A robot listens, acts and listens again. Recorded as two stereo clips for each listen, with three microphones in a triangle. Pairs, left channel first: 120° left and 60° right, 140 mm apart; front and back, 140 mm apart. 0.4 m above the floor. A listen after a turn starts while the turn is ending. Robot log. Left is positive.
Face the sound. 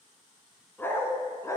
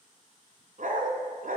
note: The dog barking: 175° right.
cmd yaw -175
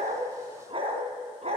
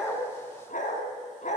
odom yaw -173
note: The dog barking is now 20° right.
cmd yaw -20
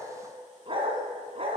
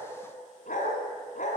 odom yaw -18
note: The dog barking is now 20° right.
cmd yaw -20
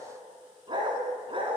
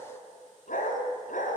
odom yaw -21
note: The dog barking is now 10° right.
cmd yaw -10
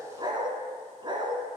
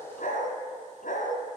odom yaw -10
end: Facing the dog barking, 2 to 4 m away.